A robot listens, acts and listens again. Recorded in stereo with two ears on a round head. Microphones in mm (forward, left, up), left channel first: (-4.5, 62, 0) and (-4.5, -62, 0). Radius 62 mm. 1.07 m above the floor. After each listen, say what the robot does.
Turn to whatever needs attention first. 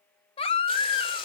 Turn 40° left.
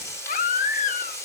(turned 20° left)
Turn 120° left.
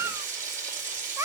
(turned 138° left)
Turn 20° right.
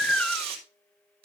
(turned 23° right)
Found it: a baby crying, straight ahead, 1 to 2 m away.